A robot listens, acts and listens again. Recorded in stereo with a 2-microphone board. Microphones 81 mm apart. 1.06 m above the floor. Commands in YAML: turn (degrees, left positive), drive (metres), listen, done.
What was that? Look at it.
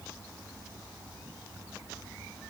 listen: true
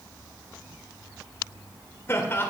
turn: 30
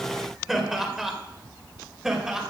done: "Found it: laughter, straight ahead, 2 to 4 m away."